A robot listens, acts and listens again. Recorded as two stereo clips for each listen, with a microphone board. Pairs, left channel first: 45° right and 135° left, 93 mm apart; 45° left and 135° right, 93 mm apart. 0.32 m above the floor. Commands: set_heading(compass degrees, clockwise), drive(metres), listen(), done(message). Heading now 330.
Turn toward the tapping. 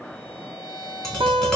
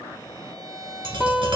set_heading(100)
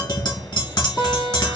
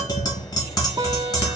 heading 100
done("Found it: tapping, straight ahead, 1 to 2 m away.")